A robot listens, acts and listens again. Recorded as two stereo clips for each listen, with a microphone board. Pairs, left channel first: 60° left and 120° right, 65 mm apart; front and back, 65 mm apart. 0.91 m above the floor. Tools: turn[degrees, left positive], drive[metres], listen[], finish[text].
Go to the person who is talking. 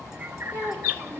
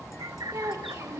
Thought: The child speaking: 125° left.
Action: turn[125]
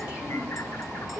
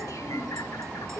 Thought: The child speaking is now 45° right.
Action: turn[-45]
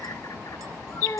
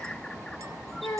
Thought: The child speaking is now 15° left.
Action: turn[15]
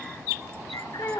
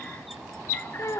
Thought: The child speaking is now 10° right.
Action: turn[-10]
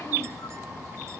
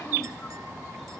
Action: listen[]
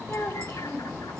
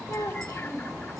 Action: drive[1.0]
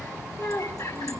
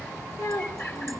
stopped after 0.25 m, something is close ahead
Action: finish[Something is in my way. I am facing the child speaking but have not reached it.]